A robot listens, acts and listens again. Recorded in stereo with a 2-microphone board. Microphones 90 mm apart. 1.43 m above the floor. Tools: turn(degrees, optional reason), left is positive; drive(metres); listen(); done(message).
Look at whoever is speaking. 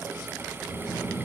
turn(degrees=-40, reason="The child speaking: about 40° right or 140° right.")
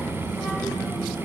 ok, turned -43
done("Found it: a child speaking, straight ahead, 2 to 4 m away.")